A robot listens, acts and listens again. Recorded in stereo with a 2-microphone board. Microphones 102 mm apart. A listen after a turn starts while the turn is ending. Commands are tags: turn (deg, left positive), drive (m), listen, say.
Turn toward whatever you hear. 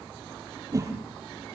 <turn deg="-35"/>
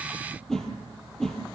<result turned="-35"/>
<say>Facing the whoosh, 2 to 4 m away.</say>